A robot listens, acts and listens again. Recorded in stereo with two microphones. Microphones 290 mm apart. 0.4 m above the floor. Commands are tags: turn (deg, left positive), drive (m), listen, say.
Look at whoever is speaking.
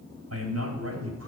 <turn deg="-60"/>
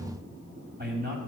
<turn deg="-40"/>
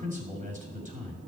<turn deg="-30"/>
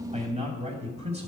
<turn deg="-25"/>
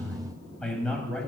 <say>Facing the man speaking, 2 to 4 m away.</say>